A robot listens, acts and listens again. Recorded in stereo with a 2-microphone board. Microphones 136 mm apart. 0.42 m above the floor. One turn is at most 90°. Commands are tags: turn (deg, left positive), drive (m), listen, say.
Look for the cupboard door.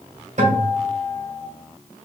<listen/>
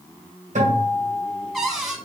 <turn deg="30"/>
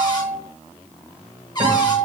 <turn deg="90"/>
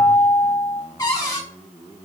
<turn deg="25"/>
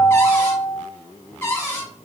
<turn deg="20"/>
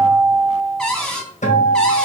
<say>Found it: a cupboard door, straight ahead, 1 to 2 m away.</say>